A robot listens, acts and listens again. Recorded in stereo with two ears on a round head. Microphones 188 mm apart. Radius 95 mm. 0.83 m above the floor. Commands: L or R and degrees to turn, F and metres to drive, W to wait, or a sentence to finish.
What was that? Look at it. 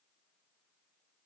W
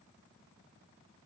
W
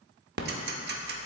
R50
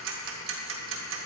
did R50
R75
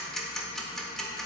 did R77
Facing the ticking, under 1 m away.